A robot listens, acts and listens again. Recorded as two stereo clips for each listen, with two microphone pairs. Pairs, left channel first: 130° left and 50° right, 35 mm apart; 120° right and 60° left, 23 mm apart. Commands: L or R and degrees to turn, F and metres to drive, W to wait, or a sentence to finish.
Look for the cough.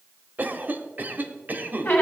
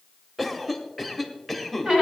R30
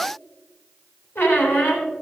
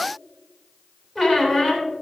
W
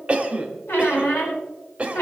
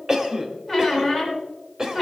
Found it: a cough, straight ahead.